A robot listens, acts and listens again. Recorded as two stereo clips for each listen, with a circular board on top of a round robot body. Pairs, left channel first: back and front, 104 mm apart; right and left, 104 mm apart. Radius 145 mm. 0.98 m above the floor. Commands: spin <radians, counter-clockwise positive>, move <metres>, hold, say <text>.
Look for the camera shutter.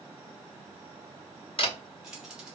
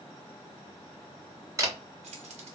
spin 2.62
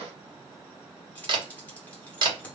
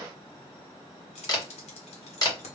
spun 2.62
spin -0.70
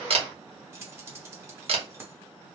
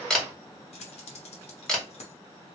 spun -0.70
say Facing the camera shutter, 1 to 2 m away.